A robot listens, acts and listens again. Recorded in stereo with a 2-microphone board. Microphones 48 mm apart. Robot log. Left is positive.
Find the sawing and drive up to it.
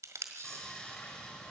note: The sawing: about 20° left or 160° left.
cmd yaw +20
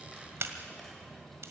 cmd fwd 1.0
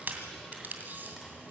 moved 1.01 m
cmd fwd 1.0
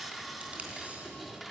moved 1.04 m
cmd fwd 1.0
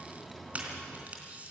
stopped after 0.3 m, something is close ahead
end: I am next to the sawing.